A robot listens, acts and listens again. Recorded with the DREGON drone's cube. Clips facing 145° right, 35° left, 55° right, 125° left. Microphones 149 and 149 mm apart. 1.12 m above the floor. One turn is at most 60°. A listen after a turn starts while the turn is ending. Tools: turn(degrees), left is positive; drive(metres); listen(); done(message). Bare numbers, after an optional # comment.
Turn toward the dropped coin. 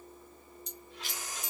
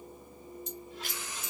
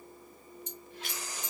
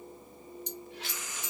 # The dropped coin: 120° left.
turn(60)
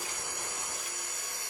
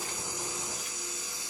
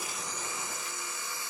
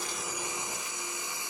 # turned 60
# Nothing new. It was at 60° left.
turn(60)
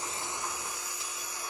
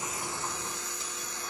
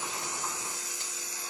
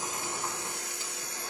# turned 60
done("Facing where the dropped coin came from. I can't hear it now.")